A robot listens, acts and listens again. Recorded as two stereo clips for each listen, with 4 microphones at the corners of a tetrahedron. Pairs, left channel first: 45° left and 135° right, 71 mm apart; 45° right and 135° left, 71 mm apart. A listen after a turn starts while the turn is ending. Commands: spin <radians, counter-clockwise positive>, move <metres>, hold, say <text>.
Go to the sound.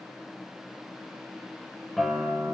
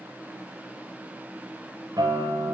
spin 2.36
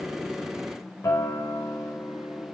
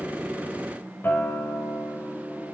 spin 0.26
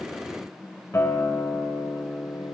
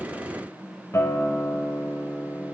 move 1.0
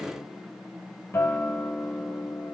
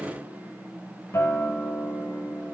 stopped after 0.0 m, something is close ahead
say Something is in my way. I am facing the guitar but have not reached it.